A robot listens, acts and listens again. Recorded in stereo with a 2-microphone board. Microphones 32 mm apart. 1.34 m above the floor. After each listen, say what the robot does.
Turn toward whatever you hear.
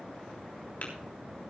Turn 55° left.
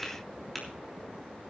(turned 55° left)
Found it: tapping, straight ahead, 2 to 4 m away.